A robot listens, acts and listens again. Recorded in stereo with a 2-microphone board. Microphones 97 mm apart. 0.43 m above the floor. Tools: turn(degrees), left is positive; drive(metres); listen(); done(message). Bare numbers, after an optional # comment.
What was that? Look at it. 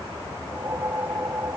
# The whoosh: about 30° right or 150° right.
turn(-30)
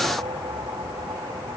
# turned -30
listen()
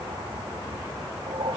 # So it is at 115° right.
turn(-115)
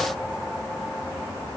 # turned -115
listen()
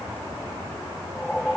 done("Facing the whoosh.")